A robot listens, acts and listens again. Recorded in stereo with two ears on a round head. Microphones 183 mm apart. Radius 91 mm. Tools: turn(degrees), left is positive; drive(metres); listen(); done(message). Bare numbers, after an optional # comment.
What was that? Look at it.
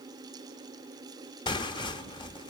# The tearing paper: about 20° left or 160° left.
turn(20)
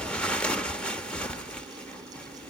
done("Found it: tearing paper, straight ahead, under 1 m away.")